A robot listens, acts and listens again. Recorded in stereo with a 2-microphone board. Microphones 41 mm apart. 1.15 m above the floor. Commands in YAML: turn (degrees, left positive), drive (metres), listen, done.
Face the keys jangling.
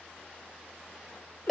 listen: true
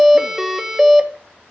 listen: true
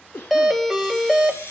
turn: 90
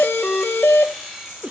turn: -10
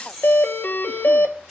done: "Found it: keys jangling, straight ahead."